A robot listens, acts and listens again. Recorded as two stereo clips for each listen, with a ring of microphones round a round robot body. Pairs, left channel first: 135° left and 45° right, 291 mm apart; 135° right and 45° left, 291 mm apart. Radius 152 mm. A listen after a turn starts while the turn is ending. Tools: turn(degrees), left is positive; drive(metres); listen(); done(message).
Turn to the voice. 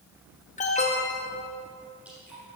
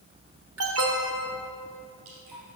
listen()
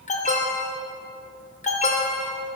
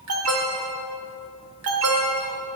listen()
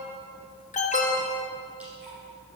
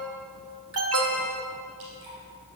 done("I can't make out anyone speaking, only an alarm and dripping.")